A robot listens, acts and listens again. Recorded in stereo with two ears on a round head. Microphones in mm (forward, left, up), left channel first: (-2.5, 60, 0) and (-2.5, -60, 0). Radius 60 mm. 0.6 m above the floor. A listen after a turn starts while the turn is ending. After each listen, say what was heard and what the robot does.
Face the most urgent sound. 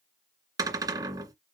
Keep listening.
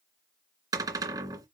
Keep listening.
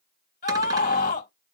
The scream: about 70° left or 110° left. Turn 70° left.
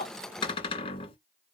Keep listening.
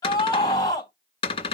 So it is at 30° left. Turn 30° left.
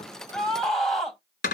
Facing the scream.